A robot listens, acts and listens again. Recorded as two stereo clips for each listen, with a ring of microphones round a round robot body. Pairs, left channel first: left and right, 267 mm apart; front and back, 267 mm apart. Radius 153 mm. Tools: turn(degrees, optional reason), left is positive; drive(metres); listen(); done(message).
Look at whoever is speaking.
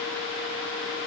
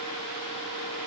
listen()
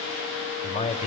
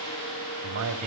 turn(degrees=155, reason="The man speaking: 155° left.")
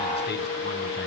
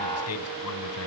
listen()
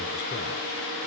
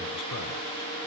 listen()
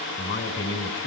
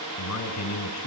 turn(degrees=40, reason="The man speaking is now 40° left.")
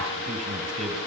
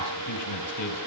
done("Found it: a man speaking, straight ahead, over 4 m away.")